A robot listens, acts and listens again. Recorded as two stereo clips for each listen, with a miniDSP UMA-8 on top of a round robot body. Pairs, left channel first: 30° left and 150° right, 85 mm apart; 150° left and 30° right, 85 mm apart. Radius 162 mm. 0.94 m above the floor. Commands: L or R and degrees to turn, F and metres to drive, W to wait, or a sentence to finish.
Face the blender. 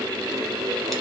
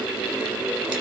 W
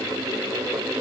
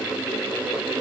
W
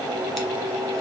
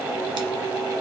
I can't make out a blender.